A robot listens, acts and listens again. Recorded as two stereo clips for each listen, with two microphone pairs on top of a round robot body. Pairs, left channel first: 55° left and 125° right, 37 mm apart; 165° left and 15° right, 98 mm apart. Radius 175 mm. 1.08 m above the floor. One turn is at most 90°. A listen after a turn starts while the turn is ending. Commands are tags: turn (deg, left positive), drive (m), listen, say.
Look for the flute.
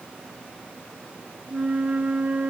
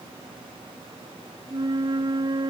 <turn deg="-65"/>
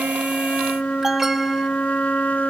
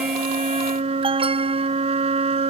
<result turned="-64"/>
<say>Facing the flute.</say>